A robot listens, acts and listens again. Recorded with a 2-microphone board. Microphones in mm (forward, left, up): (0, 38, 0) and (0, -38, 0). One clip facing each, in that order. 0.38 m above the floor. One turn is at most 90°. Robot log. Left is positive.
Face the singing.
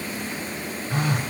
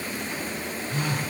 cmd idle
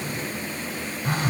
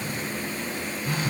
cmd idle
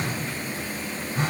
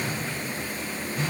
end: I can't make out singing to turn to.